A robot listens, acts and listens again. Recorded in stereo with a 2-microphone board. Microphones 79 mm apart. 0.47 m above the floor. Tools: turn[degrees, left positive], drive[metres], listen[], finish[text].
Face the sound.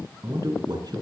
Thought: The man speaking: about 60° right or 120° right.
Action: turn[-60]
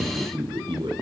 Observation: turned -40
Thought: So it is at 80° right.
Action: turn[-80]
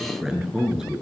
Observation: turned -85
Thought: The man speaking is now 10° right.
Action: turn[-10]
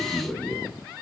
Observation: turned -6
Action: finish[Found it: a man speaking, straight ahead, over 4 m away.]